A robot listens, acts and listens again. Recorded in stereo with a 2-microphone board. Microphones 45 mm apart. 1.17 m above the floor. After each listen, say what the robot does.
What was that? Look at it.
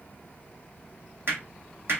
Turn 60° right.
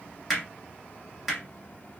Facing the hammering.